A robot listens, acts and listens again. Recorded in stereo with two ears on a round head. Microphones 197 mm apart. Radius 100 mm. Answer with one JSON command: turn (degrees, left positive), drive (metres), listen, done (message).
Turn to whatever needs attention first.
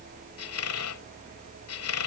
{"listen": true}
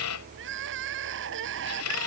{"turn": -60}
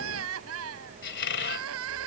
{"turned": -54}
{"turn": -65}
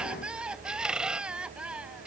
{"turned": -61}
{"done": "Facing the crying."}